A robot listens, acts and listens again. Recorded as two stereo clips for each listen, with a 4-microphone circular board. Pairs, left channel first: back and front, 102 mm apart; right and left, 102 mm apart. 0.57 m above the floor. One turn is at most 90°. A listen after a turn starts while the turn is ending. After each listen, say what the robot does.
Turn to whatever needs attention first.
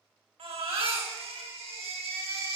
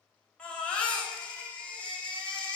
Turn 10° right.
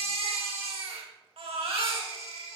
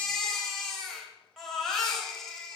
Found it: a baby crying, straight ahead.